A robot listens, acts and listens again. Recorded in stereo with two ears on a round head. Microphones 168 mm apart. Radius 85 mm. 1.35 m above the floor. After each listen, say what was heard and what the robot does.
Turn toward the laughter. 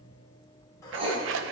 Keep listening.
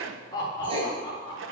The laughter: about 25° left or 155° left. Turn 25° left.
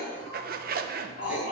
So it is at 125° left. Turn 125° left.
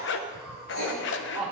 Found it: laughter, straight ahead.